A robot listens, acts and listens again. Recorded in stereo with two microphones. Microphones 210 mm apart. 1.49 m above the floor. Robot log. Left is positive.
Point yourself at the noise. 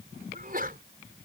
note: The sneeze: about 45° right or 135° right.
cmd yaw -45
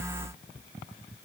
cmd idle
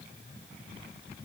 end: I heard a sneeze, but can't make it out now. It was about straight ahead or 90° right.